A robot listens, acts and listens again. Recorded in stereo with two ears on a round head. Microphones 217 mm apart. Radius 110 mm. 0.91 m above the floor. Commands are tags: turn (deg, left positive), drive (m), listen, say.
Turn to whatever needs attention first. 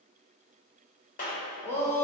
<turn deg="30"/>
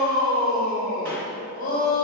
<turn deg="140"/>
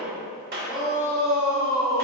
<say>Found it: a shout, straight ahead.</say>